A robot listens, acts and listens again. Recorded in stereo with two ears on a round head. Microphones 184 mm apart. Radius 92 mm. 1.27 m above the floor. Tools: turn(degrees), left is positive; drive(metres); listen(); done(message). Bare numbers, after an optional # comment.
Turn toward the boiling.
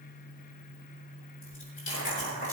# The boiling: about 35° left or 145° left.
turn(35)
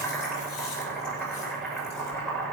done("Facing the boiling.")